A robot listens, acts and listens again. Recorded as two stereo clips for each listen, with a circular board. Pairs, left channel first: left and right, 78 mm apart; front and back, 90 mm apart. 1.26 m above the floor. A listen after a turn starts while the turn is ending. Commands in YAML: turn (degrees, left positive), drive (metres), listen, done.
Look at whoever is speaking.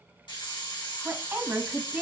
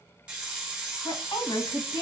turn: -30
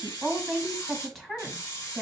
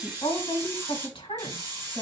done: "Found it: a woman speaking, straight ahead, 1 to 2 m away."